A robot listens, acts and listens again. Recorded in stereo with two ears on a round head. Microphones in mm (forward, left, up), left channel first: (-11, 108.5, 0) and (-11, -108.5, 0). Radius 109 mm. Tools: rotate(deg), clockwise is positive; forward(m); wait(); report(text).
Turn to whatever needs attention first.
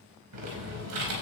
wait()
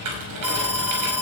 rotate(30)
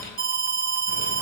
rotate(140)
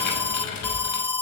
rotate(-10)
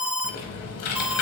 report("Found it: an alarm, straight ahead, 1 to 2 m away.")